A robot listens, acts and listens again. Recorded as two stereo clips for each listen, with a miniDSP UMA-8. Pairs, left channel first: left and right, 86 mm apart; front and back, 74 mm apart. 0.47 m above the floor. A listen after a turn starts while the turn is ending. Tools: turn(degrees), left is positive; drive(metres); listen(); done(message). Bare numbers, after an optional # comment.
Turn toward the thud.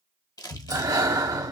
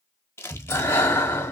# The thud: 130° right.
turn(-130)
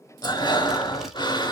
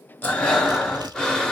done("I heard a thud from this way, but can't make it out now.")